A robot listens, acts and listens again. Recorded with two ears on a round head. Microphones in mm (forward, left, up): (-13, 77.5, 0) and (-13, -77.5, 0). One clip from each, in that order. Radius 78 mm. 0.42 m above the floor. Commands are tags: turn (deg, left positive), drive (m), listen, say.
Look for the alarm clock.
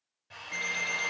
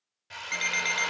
<turn deg="-70"/>
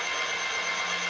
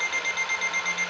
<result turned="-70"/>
<turn deg="-40"/>
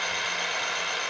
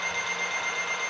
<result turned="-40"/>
<listen/>
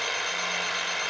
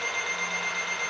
<listen/>
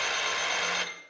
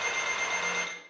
<say>Facing where the alarm clock came from. I can't hear it now.</say>